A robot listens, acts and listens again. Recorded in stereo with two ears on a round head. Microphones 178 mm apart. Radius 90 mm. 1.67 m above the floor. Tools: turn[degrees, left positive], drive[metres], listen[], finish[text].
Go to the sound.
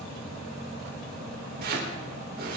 Thought: The chopping: about 50° right or 130° right.
Action: turn[-50]
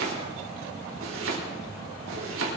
Thought: So it is at 75° right.
Action: turn[-75]
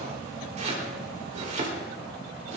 Thought: The chopping is now 35° right.
Action: turn[-35]
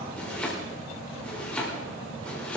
Action: drive[1.0]
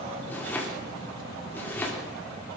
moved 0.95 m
Thought: The chopping is now 10° left.
Action: turn[10]
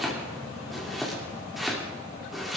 Action: drive[1.0]
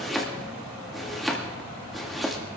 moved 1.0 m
Action: drive[1.0]
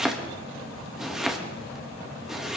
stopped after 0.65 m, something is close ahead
Action: finish[I am next to the chopping.]